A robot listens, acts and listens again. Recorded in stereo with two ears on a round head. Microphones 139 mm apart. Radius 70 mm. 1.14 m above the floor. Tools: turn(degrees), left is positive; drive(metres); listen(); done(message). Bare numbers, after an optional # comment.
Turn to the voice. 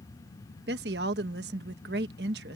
# The woman speaking: about 75° right or 105° right.
turn(-75)
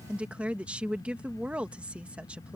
# So it is at 10° right.
turn(-10)
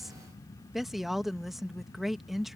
done("Found it: a woman speaking, straight ahead.")